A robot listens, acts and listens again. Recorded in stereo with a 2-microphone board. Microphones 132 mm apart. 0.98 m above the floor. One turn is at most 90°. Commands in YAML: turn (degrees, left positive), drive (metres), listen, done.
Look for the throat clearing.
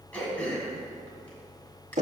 turn: 30
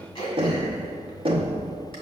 turn: 90
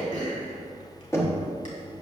turn: 75
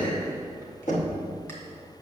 listen: true
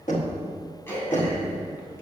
turn: 20
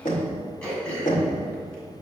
turn: 10
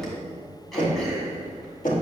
listen: true
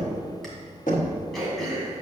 done: "Found it: throat clearing, straight ahead."